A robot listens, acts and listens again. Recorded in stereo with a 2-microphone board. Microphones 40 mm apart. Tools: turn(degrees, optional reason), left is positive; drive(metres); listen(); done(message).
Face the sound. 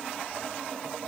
listen()
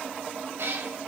turn(degrees=-90)
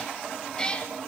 turn(degrees=25, reason="So it is at 25° left.")
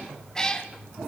turn(degrees=20, reason="The cat meowing is now 20° left.")
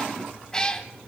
turn(degrees=20, reason="The cat meowing is now 20° left.")
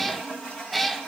done("Facing the cat meowing, 1 to 2 m away.")